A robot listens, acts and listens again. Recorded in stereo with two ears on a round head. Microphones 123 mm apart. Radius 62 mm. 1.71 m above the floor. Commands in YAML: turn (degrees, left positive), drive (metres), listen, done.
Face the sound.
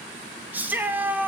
turn: -30
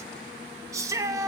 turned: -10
turn: -25
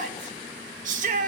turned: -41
turn: -115
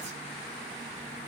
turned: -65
turn: -50
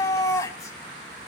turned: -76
turn: 25
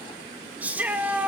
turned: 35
turn: -10
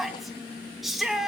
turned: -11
done: "Facing the shout."